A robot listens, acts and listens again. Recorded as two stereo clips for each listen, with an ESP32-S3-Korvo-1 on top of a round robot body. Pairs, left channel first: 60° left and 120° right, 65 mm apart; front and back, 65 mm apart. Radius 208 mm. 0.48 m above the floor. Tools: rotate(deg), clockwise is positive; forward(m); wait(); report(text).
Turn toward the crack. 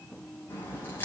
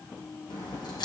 report("Found it: a crack, straight ahead, over 4 m away.")